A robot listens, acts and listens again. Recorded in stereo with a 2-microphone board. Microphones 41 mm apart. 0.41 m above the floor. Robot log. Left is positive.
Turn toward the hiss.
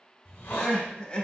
note: The hiss: about 50° left or 130° left.
cmd yaw +50
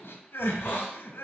note: So it is at 70° left.
cmd yaw +70
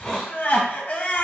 note: The hiss is now 10° left.
cmd yaw +10
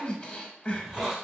end: Found it: a hiss, straight ahead, 1 to 2 m away.